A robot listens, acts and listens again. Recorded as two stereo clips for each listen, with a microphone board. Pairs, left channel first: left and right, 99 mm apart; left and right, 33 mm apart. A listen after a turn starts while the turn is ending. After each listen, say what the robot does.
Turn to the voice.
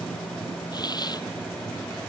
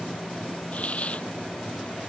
Keep listening.
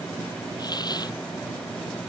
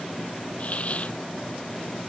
Keep listening.
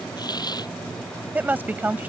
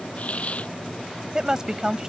Turn 20° right.
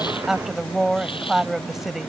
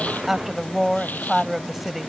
Found it: a woman speaking, straight ahead.